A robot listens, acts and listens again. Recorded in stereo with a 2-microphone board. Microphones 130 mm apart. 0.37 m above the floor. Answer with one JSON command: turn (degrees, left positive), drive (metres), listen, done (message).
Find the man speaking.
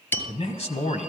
{"turn": 55}
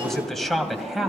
{"done": "Found it: a man speaking, straight ahead, 1 to 2 m away."}